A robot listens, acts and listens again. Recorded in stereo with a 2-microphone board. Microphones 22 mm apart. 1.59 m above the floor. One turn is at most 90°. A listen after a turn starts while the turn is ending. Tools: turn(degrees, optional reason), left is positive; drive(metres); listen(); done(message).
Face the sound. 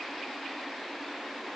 listen()
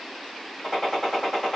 turn(degrees=30)
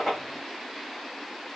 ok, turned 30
listen()
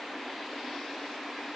done("I heard a gunshot, but can't make it out now. It was about 15° right or 135° left.")